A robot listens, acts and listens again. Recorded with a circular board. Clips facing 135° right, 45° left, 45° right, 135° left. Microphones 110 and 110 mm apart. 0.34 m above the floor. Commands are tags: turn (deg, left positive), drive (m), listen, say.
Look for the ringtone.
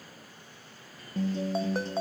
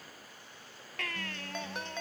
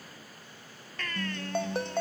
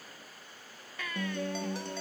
<turn deg="-80"/>
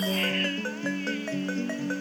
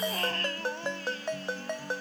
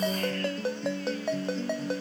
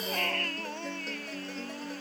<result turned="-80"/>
<turn deg="-25"/>
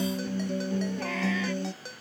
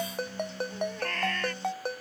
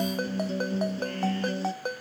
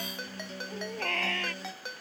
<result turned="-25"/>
<say>Found it: a ringtone, straight ahead.</say>